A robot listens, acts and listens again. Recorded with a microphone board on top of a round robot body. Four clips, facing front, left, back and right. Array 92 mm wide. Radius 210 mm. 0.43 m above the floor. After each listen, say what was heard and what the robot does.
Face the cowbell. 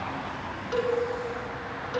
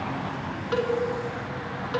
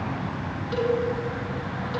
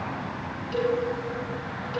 The cowbell: 75° left. Turn 75° left.
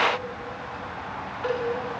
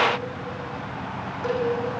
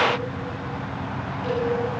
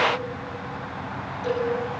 The cowbell is now 30° left. Turn 30° left.
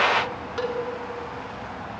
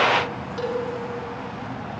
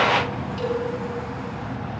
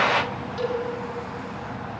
Facing the cowbell, over 4 m away.